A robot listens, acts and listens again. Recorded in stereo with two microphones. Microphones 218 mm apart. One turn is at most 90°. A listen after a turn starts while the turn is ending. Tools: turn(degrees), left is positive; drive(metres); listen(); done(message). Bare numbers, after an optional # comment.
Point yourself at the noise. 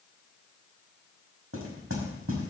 turn(-90)
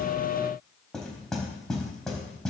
done("Facing the knocking.")